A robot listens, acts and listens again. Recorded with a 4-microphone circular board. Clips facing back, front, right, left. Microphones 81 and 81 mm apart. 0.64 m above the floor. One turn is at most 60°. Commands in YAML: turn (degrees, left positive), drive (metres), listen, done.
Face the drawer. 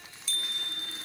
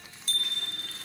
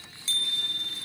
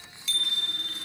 listen: true
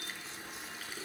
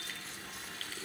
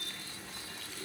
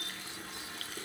listen: true
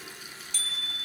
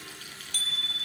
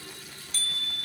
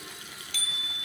done: "I can't make out a drawer, only a bicycle bell and a running tap."